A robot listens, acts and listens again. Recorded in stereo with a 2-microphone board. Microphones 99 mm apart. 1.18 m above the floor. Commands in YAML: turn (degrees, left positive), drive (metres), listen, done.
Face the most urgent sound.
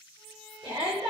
turn: -70
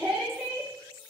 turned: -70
done: "Found it: a shout, straight ahead, 2 to 4 m away."